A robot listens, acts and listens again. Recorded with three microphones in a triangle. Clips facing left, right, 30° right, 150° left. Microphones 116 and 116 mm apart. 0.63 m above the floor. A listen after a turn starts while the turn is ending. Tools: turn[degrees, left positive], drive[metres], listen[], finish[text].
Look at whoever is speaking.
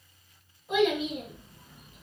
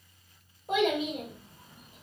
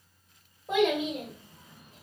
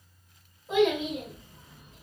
Thought: The child speaking: 55° right.
Action: turn[-55]
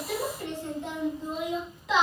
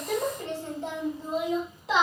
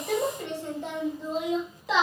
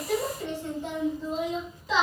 Thought: The child speaking is now 30° right.
Action: turn[-30]
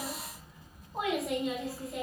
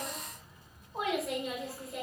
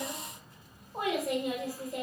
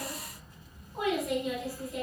Action: finish[Facing the child speaking, 1 to 2 m away.]